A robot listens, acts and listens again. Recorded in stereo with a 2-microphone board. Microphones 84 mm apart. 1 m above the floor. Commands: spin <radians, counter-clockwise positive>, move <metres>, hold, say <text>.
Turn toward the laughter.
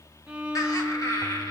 spin 0.79
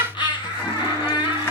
spin 1.31
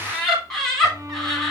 say Found it: laughter, straight ahead.